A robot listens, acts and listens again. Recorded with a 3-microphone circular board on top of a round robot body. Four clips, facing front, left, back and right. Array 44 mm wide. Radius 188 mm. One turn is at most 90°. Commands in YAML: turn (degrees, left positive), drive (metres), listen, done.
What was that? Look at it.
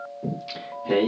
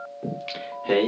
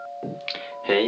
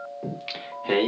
turn: -90
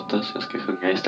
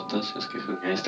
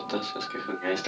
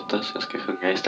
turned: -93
turn: -50
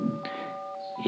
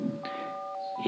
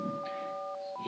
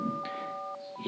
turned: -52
turn: 30
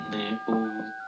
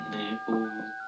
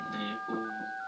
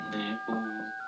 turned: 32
turn: 10
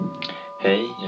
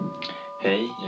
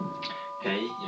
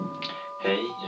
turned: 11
turn: 15
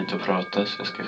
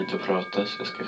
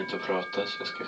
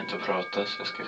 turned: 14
done: "Facing the singing, 1 to 2 m away."